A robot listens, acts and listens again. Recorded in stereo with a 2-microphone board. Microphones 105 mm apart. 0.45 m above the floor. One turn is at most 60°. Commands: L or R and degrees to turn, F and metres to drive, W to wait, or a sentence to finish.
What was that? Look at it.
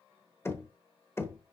L25
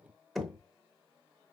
Facing the knocking.